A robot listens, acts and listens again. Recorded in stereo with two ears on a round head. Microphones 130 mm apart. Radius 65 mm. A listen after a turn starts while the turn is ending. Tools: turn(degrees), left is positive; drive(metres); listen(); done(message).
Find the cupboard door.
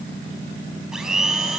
listen()
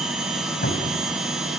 turn(degrees=70)
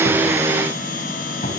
turn(degrees=40)
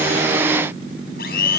listen()
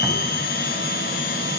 listen()
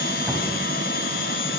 done("Facing where the cupboard door came from. I can't hear it now.")